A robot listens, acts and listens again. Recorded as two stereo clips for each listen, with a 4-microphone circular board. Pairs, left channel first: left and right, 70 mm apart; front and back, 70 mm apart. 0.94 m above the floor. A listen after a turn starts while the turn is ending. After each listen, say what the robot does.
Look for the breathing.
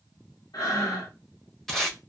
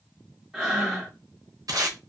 Turn 95° left.
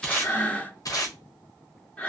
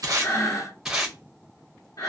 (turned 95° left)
Turn 20° left.
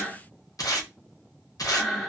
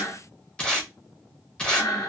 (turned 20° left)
Facing the breathing.